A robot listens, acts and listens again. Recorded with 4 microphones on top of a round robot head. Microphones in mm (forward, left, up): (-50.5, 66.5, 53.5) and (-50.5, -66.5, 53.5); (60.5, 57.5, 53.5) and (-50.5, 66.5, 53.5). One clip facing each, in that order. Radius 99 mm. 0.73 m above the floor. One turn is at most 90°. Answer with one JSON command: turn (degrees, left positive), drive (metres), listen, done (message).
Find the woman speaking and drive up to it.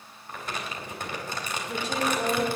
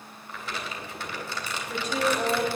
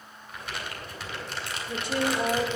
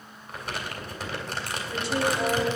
{"turn": 25}
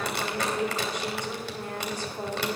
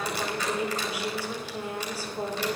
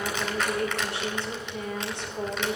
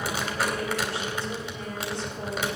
{"drive": 1.0}
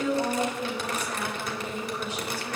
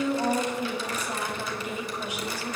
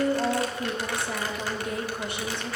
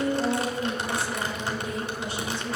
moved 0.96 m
{"turn": -15}
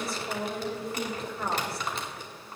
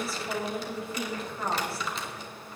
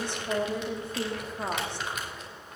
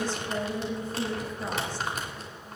{"drive": 1.0}
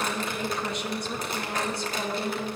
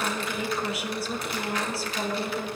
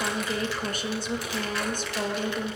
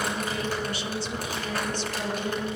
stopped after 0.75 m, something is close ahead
{"done": "Arrived at the woman speaking, straight ahead."}